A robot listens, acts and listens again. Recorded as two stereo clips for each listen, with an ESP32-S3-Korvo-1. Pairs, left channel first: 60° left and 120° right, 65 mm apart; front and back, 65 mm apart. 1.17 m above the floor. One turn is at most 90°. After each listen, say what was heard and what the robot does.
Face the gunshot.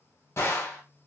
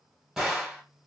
The gunshot: 95° left. Turn 90° left.
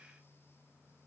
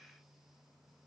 I heard a gunshot from this way, but can't make it out now.